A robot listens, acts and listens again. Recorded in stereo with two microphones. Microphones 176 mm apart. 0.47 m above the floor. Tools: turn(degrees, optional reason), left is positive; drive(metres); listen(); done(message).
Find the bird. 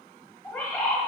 turn(degrees=30)
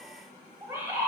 turn(degrees=-15, reason="So it is at 15° right.")
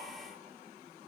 listen()
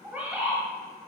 done("Facing the bird.")